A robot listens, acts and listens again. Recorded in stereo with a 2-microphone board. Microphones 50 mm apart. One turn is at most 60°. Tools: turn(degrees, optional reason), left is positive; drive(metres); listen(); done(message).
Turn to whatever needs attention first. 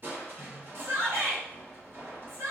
turn(degrees=-55, reason="The shout: about 55° right or 125° right.")
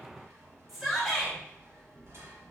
done("Found it: a shout, straight ahead, under 1 m away.")